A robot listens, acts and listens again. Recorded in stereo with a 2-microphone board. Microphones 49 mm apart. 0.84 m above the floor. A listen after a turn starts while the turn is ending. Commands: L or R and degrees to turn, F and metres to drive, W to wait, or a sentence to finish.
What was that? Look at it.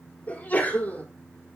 L35
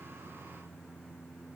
W
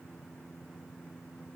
I heard a sneeze, but can't make it out now. It was about straight ahead or 110° left.